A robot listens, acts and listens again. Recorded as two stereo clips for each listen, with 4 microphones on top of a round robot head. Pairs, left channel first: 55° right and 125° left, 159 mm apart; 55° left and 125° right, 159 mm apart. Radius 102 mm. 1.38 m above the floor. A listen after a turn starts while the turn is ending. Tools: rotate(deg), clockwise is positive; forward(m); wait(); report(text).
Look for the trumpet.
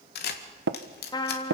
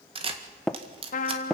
rotate(-10)
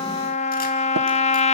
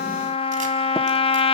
report("Facing the trumpet.")